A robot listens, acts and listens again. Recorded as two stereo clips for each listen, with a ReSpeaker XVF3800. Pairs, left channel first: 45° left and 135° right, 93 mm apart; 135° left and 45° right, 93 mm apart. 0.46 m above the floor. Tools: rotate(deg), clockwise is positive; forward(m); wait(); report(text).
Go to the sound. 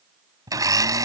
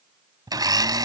rotate(85)
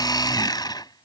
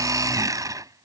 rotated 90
forward(1.0)
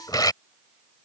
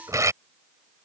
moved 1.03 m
forward(1.0)
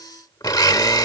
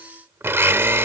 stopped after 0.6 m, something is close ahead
rotate(-10)
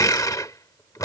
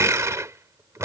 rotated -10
report("I am next to the blender.")